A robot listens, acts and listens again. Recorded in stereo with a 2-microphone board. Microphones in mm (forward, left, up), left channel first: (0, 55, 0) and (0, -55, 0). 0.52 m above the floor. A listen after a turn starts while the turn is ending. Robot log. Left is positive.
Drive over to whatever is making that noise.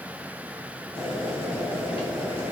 note: The boiling: about 55° left or 125° left.
cmd yaw +55
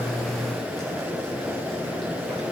cmd fwd 1.0
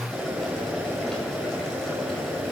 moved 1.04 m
cmd fwd 1.0
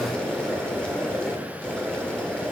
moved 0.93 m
note: The boiling is now 10° left.
cmd yaw +10
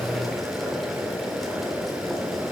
cmd fwd 1.0
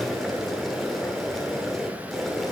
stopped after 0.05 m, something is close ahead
end: Arrived at the boiling, straight ahead.